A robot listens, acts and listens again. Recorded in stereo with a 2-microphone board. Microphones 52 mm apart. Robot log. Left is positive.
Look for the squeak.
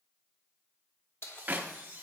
note: The squeak: about 40° right or 140° right.
cmd yaw -40
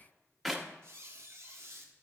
note: So it is at 90° right.
cmd yaw -90
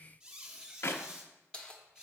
note: The squeak is now 25° right.
cmd yaw -25
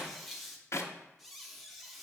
end: Facing the squeak.